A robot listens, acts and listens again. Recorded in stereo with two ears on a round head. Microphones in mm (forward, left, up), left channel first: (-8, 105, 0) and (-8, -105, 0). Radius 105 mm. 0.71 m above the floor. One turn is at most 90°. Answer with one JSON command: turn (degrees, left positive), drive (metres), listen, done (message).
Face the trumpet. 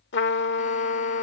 {"turn": 50}
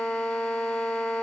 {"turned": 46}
{"done": "Found it: a trumpet, straight ahead."}